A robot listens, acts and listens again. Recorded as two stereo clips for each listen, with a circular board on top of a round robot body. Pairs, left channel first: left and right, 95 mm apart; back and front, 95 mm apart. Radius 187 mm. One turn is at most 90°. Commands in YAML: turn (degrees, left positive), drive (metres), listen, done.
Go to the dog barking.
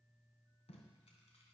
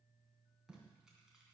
listen: true
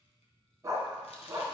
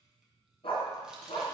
turn: -90
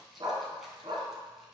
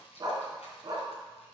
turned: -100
turn: -50
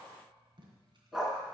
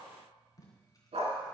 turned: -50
drive: 1.0
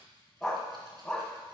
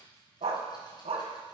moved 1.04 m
drive: 1.0
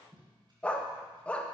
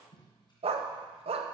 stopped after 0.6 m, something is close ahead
turn: 10
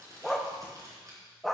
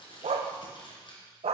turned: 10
done: "Arrived at the dog barking, straight ahead."